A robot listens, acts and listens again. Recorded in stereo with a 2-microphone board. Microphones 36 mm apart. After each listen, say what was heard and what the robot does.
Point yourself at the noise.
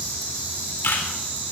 Turn 90° left.
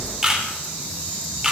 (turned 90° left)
So it is at 15° right. Turn 15° right.
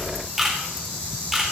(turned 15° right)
Found it: a camera shutter, straight ahead, 2 to 4 m away.